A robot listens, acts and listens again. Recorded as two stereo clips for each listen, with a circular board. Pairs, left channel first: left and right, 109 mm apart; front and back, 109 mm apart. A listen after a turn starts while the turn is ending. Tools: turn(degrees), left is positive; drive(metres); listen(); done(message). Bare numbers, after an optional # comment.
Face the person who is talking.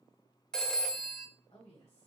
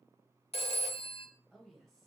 # The woman speaking: 90° left.
turn(90)
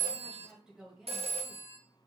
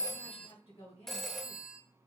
done("Found it: a woman speaking, straight ahead, 2 to 4 m away.")